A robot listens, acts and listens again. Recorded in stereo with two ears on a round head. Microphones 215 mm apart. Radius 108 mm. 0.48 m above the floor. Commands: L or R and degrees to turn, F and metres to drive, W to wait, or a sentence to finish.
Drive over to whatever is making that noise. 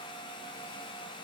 W
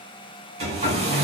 R30
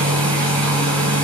F1.0
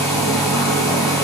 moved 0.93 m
L10
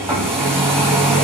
F1.0
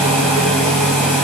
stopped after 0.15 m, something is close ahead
Arrived at the hair dryer, straight ahead.